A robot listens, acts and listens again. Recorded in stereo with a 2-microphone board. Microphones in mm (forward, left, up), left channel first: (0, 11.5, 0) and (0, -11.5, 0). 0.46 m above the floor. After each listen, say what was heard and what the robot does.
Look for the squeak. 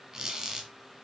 The squeak: about 25° right or 155° right. Turn 25° right.
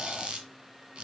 So it is at 125° right. Turn 125° right.
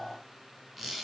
The squeak is now 10° right. Turn 10° right.
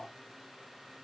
Keep listening.
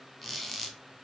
Found it: a squeak, straight ahead, 2 to 4 m away.